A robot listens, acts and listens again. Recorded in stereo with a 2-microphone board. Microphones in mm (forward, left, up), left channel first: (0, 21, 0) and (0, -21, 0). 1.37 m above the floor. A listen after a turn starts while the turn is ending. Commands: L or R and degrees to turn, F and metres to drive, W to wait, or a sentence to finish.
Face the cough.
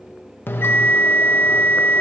W
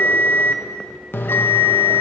W
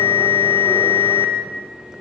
I can't make out a cough, only a bell.